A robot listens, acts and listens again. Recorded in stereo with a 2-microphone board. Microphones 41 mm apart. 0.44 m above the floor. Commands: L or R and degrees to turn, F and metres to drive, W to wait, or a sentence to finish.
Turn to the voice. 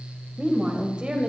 R20
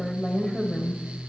Found it: a woman speaking, straight ahead.